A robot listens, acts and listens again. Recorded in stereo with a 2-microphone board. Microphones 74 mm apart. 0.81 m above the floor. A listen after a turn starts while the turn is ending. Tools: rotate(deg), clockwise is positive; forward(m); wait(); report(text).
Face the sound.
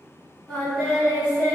rotate(-20)
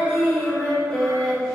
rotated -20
rotate(-140)
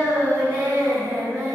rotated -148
rotate(10)
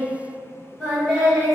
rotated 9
report("Found it: singing, straight ahead.")